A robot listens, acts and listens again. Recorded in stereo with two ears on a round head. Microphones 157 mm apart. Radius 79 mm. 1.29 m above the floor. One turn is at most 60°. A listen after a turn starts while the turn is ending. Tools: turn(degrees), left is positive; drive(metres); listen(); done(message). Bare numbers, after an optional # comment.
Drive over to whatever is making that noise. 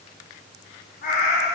# The cat meowing: about 55° left or 125° left.
turn(55)
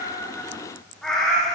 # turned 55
drive(1.0)
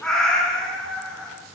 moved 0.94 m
drive(1.0)
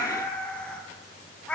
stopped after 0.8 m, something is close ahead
# The cat meowing is now 10° left.
turn(10)
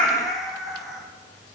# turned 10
done("I am next to the cat meowing.")